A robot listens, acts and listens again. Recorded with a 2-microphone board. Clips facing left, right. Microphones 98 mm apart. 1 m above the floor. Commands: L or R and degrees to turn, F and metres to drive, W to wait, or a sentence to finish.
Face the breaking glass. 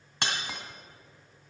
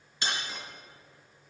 L65
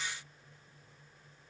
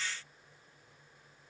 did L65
W
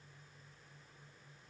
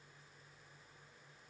I heard breaking glass, but can't make it out now. It was about straight ahead or 50° left.